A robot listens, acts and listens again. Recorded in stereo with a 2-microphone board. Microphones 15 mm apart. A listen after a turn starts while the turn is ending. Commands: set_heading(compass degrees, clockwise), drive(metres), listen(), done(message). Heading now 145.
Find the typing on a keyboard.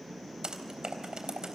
set_heading(200)
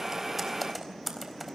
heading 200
done("Facing the typing on a keyboard.")